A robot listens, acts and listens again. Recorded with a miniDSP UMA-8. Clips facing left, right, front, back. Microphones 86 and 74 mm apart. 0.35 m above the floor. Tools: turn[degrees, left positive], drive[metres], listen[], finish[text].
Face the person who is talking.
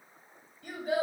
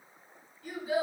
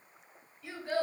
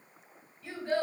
Thought: The child speaking: 75° left.
Action: turn[75]
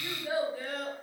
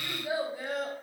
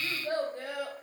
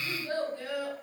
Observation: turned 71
Thought: The child speaking is now 30° right.
Action: turn[-30]
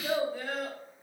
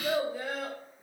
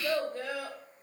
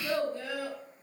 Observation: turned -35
Thought: The child speaking is now 20° right.
Action: turn[-20]
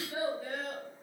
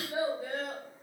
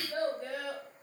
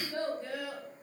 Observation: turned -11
Thought: The child speaking is now 25° right.
Action: turn[-25]
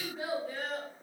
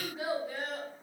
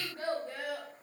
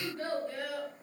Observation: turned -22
Thought: The child speaking is now 15° right.
Action: turn[-15]
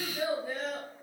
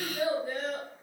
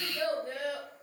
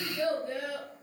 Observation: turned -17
Action: finish[Found it: a child speaking, straight ahead.]